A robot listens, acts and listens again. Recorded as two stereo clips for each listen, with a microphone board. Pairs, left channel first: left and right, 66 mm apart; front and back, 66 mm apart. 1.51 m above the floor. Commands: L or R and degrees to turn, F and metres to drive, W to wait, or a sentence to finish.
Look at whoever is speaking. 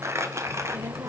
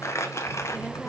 R95
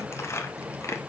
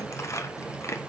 R10
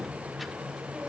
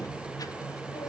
Found it: a child speaking, straight ahead.